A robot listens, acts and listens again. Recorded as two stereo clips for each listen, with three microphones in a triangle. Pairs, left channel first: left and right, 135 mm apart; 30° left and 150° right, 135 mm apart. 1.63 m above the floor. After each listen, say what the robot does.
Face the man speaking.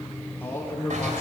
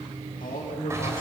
Turn 20° left.
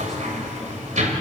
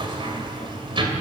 Keep listening.
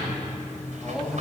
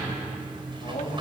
Found it: a man speaking, straight ahead, 2 to 4 m away.